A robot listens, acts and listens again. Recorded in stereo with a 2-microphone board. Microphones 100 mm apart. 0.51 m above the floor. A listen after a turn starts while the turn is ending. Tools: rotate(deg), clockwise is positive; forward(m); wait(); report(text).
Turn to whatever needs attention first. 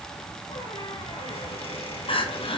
rotate(-65)
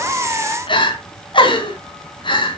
rotate(-55)
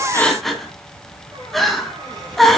report("Found it: crying, straight ahead, 2 to 4 m away.")